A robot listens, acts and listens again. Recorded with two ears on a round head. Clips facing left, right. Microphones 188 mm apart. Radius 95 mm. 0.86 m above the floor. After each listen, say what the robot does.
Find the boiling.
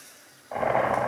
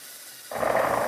Turn 15° right.
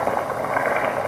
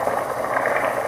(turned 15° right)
Found it: boiling, straight ahead, 1 to 2 m away.